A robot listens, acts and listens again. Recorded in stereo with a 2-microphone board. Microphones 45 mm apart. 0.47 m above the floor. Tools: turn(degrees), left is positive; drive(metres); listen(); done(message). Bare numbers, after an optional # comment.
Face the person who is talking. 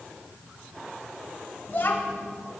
# The child speaking: about 45° left or 135° left.
turn(45)
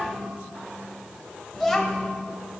done("Found it: a child speaking, straight ahead.")